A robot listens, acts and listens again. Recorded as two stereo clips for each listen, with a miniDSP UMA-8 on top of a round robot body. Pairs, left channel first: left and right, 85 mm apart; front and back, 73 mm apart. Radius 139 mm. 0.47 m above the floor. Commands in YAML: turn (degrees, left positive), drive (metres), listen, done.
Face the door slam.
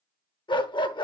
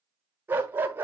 listen: true
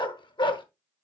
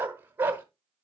listen: true
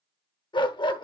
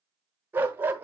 done: "I can't make out a door slam to turn to."